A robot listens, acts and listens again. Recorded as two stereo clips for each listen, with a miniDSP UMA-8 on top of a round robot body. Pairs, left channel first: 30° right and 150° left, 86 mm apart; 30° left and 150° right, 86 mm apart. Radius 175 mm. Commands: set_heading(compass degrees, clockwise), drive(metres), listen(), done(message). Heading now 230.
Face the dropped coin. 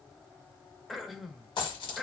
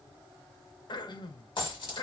done("Facing the dropped coin.")